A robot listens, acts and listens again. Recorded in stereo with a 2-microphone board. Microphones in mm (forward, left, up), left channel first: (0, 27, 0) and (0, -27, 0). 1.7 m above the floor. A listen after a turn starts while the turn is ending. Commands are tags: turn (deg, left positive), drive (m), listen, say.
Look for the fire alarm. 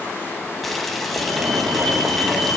<turn deg="-90"/>
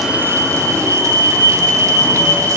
<turn deg="-10"/>
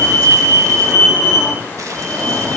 <say>Facing the fire alarm, over 4 m away.</say>